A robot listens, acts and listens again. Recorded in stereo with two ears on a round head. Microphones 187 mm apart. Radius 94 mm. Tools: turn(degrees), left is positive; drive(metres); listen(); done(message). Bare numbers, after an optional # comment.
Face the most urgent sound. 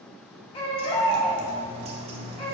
# The baby crying: about 25° left or 155° left.
turn(25)
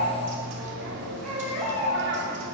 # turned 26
done("Facing the baby crying, 1 to 2 m away.")